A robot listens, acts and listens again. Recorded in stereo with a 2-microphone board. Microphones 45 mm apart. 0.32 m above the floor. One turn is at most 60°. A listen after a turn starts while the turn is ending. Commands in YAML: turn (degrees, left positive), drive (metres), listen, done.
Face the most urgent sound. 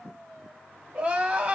turn: -25
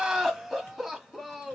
done: "Found it: crying, straight ahead."